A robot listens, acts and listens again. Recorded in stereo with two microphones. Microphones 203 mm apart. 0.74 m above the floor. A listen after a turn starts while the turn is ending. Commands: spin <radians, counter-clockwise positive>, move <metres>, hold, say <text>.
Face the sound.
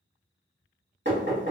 spin -1.13
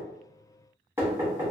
spin -0.26
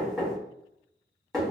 say Facing the knocking.